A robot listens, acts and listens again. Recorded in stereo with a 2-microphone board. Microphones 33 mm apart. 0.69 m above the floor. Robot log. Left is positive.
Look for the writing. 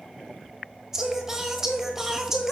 cmd idle
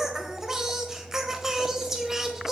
cmd idle
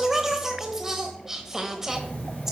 note: The writing: about 60° left or 120° left.
cmd yaw +60
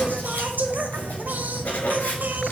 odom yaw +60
note: So it is at 60° left.
cmd yaw +60
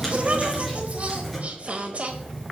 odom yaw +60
end: Found it: writing, straight ahead, 2 to 4 m away.